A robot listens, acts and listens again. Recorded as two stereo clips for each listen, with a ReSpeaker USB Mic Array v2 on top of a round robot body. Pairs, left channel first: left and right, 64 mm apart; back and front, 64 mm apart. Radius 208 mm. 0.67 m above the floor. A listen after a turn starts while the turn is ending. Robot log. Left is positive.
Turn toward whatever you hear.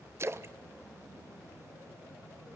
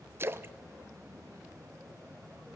note: The splash: 50° right.
cmd yaw -50
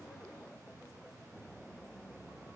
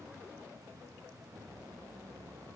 end: Facing where the splash came from. I can't hear it now.